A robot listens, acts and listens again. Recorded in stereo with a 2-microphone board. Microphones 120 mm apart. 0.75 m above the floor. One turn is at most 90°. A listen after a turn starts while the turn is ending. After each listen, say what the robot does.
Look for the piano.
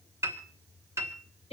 Turn 20° right.
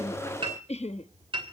Turn 90° right.
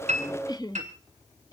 Turn 85° right.
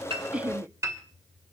Turn 25° right.
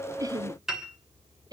Found it: a piano, straight ahead, 2 to 4 m away.